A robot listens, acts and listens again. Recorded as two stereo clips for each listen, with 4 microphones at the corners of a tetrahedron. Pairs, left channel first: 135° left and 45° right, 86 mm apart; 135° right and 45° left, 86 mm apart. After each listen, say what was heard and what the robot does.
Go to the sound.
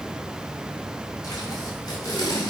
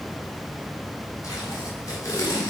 The tape being pulled: 175° left. Turn 175° left.
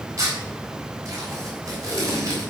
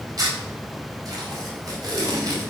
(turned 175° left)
Drive 1.0 m forward.
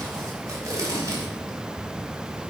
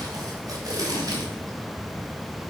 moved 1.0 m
Drive 1.0 m forward.
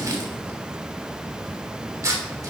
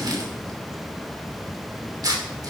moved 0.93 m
Drive 1.0 m forward.
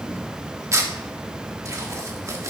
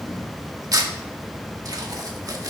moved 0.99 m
Drive 1.0 m forward.
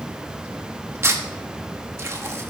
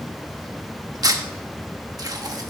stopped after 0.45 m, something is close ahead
The tape being pulled is now 10° left. Turn 10° left.
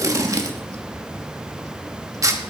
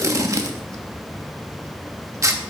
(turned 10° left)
I am next to the tape being pulled.